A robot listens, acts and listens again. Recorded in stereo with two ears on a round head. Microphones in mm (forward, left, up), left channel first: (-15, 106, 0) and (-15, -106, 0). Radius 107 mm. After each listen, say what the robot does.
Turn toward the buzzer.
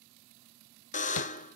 Turn 35° left.
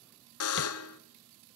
Turn 110° left.
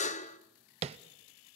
Turn 30° left.
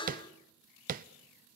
Turn 20° left.
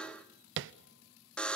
Facing the buzzer, under 1 m away.